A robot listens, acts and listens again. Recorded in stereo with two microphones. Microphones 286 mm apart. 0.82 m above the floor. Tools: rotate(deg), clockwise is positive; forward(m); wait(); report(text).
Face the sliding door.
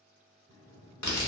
rotate(-15)
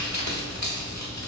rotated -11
wait()
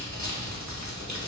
wait()
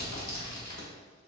report("I heard a sliding door, but can't make it out now. It was about 5° left or 150° left.")